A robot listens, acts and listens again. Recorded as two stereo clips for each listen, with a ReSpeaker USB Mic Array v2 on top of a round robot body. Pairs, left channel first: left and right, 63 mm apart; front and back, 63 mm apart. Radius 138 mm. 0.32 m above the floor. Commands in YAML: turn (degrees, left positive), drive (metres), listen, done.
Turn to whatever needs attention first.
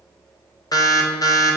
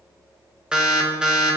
turn: 105
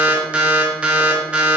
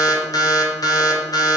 turn: -15
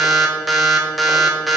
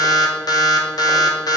done: "Found it: an alarm, straight ahead, 1 to 2 m away."